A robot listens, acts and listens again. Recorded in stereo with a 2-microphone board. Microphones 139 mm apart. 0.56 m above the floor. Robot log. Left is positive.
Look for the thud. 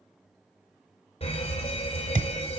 cmd yaw -90
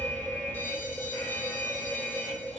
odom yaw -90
end: Facing where the thud came from. I can't hear it now.